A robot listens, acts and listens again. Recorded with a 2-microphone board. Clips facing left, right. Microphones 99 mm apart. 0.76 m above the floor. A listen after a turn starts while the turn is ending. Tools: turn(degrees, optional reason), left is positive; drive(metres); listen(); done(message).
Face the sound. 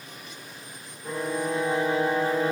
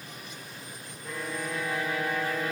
turn(degrees=30, reason="The violin: about 30° left or 150° left.")
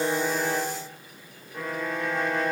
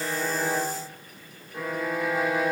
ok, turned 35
done("Facing the violin.")